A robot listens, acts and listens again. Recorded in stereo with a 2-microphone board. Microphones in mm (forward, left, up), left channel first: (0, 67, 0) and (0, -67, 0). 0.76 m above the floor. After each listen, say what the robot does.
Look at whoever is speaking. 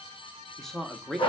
Turn 30° left.
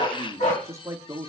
Turn 25° right.
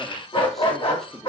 Keep listening.
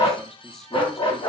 Keep listening.
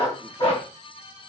I heard a man speaking from this way, but can't make it out now.